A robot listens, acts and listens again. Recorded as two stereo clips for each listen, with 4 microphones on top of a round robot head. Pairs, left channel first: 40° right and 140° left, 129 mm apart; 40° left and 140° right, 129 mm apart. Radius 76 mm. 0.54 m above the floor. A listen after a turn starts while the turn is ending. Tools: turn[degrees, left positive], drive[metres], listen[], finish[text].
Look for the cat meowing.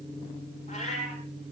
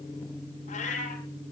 Action: finish[Found it: a cat meowing, straight ahead.]